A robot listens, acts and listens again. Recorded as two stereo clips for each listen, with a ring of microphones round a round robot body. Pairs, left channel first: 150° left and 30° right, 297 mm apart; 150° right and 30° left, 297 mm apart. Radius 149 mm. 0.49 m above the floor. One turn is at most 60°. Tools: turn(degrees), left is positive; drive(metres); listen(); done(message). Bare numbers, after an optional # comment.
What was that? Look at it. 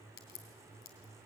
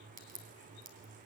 # The crack: 90° left.
turn(60)
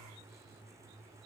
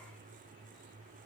# Nothing new. It was at 30° left.
turn(30)
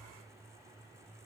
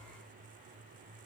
done("I heard a crack from this way, but can't make it out now.")